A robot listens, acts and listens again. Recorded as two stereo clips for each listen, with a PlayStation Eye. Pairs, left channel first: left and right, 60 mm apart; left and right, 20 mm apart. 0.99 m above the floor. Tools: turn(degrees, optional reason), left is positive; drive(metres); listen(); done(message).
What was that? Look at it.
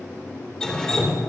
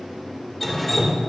turn(degrees=30)
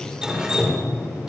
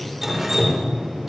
turn(degrees=-15, reason="So it is at 15° right.")
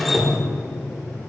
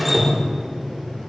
done("Facing the dripping, 2 to 4 m away.")